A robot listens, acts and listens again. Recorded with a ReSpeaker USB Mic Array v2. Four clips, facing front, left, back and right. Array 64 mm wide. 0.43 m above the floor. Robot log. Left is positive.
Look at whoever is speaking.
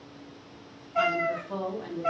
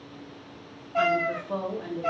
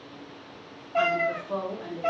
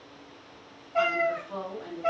note: The woman speaking: 125° left.
cmd yaw +125
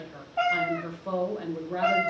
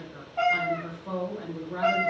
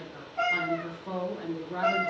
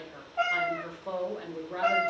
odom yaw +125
note: The woman speaking is now 35° right.
cmd yaw -35
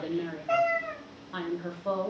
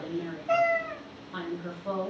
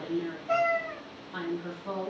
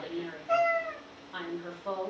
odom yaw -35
note: The woman speaking is now 10° right.
cmd yaw -10
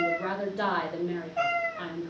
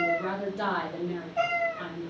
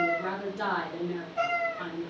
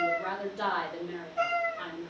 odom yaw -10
end: Facing the woman speaking.